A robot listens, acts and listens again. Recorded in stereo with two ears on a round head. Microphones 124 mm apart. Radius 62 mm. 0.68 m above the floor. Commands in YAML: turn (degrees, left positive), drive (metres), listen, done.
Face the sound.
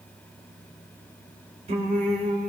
turn: -60
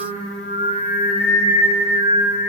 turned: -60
turn: -50
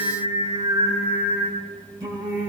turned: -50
turn: -30
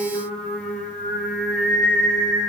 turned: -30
done: "Found it: singing, straight ahead."